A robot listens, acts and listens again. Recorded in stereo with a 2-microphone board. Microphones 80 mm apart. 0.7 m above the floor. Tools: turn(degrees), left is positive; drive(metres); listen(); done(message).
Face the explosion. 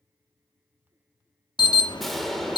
turn(degrees=30)
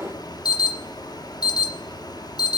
turn(degrees=-30)
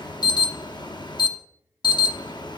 done("Facing where the explosion came from. I can't hear it now.")